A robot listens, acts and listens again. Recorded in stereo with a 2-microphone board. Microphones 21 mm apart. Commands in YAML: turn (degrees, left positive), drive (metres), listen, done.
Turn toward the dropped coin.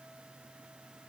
listen: true
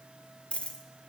turn: 70
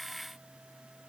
listen: true
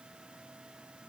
done: "I heard a dropped coin, but can't make it out now. It was about straight ahead or 40° left."